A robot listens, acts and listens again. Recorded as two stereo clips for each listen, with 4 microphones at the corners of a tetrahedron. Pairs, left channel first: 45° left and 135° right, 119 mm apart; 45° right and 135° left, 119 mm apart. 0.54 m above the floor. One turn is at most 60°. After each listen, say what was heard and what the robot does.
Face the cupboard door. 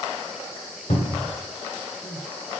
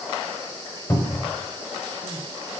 The cupboard door: 20° left. Turn 20° left.
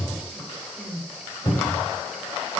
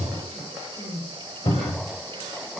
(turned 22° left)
Facing the cupboard door, 1 to 2 m away.